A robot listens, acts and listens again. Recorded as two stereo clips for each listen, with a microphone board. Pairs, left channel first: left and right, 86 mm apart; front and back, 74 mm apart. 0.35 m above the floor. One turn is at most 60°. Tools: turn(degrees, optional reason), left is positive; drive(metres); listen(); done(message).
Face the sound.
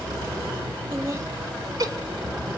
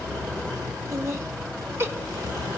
turn(degrees=-60, reason="The laughter: 130° right.")
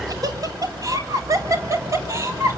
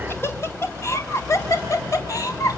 turn(degrees=-40, reason="The laughter is now 40° right.")
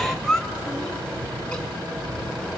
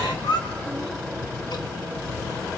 done("Found it: laughter, straight ahead.")